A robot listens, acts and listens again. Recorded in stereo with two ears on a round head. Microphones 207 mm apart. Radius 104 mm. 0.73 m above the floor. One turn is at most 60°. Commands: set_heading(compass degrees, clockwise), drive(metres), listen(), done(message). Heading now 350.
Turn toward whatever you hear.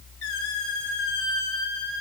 set_heading(290)
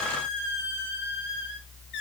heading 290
set_heading(235)
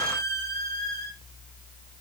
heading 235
set_heading(220)
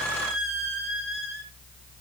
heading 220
done("Facing the squeak, over 4 m away.")